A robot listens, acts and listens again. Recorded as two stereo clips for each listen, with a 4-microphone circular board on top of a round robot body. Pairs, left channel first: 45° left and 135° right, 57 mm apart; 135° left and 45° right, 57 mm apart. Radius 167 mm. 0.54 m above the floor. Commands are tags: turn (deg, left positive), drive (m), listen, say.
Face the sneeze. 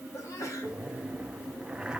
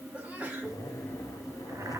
<turn deg="25"/>
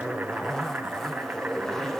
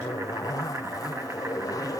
<say>I heard a sneeze from this way, but can't make it out now.</say>